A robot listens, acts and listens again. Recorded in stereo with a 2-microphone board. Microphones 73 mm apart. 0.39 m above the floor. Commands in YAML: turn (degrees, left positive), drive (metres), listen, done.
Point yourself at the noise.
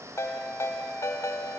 turn: 40
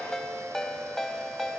done: "Found it: a ringtone, straight ahead."